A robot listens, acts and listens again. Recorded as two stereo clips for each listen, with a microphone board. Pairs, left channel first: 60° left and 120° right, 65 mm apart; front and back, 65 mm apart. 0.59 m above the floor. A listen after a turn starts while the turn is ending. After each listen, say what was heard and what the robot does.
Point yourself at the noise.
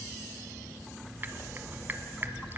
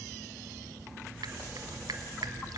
The dripping: straight behind. Turn 180° left.
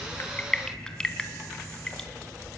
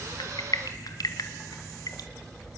The dripping is now 15° right. Turn 15° right.
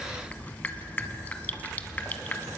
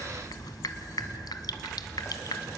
Facing the dripping, 1 to 2 m away.